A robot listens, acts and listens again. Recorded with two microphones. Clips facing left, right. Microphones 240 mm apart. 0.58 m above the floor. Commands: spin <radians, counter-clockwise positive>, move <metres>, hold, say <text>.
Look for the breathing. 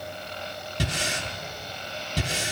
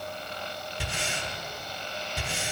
spin 1.31
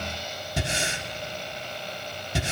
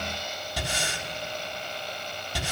spin 0.44
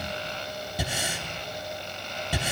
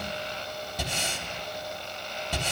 spin 0.17
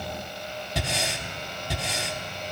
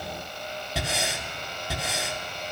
say Found it: breathing, straight ahead.